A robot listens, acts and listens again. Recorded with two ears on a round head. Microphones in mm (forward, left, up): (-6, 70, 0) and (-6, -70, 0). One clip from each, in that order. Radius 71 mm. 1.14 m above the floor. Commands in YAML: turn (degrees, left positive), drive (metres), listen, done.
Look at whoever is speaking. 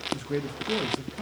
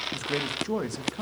turn: -55
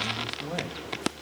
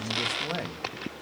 turn: -65
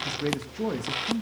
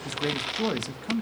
turn: -30
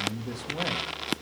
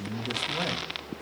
turn: -15
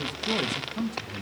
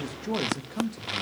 done: "Facing the man speaking."